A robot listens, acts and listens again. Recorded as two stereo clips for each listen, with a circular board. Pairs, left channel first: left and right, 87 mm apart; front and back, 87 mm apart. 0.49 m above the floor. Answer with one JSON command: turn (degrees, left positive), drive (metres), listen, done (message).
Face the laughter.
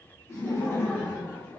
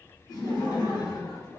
{"turn": 20}
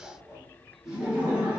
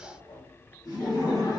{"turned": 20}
{"turn": -25}
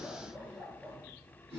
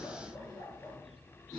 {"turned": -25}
{"turn": -35}
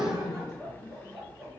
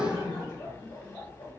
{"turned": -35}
{"turn": -20}
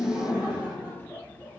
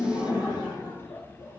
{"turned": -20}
{"done": "Found it: laughter, straight ahead, 1 to 2 m away."}